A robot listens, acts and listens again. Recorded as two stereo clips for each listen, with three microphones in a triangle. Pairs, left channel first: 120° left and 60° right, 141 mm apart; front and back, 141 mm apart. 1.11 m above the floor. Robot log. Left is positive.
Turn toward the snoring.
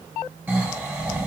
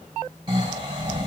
note: The snoring: 130° right.
cmd yaw -130
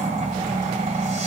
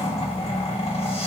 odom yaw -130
note: The snoring is now 30° right.
cmd yaw -30
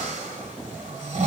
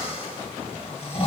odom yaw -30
note: The snoring is now 35° right.
cmd yaw -35
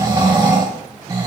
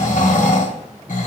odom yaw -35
end: Found it: snoring, straight ahead, 1 to 2 m away.